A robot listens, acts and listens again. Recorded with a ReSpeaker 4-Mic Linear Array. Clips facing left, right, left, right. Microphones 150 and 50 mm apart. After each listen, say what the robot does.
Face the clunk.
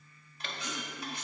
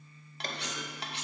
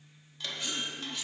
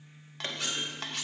Turn 40° right.
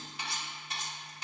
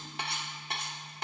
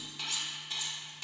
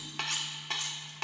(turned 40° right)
Keep listening.
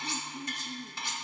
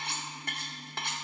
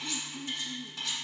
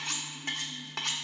I heard a clunk, but can't make it out now. It was about straight ahead or 100° right.